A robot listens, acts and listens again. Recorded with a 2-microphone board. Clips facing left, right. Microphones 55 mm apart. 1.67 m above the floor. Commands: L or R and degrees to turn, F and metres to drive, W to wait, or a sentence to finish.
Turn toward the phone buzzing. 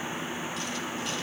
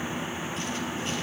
W
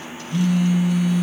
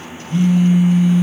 R30
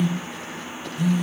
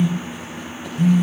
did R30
R120
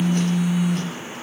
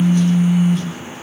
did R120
R50
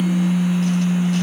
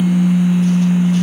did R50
Facing the phone buzzing.